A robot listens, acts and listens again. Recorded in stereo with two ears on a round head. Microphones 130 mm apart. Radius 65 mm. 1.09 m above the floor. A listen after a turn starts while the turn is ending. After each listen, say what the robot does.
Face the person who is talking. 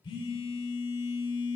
Keep listening.
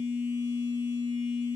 Keep listening.
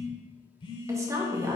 Turn 20° right.
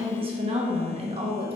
Turn 140° right.
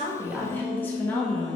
Turn 15° left.
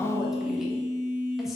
Keep listening.
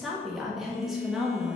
Found it: a woman speaking, straight ahead, 1 to 2 m away.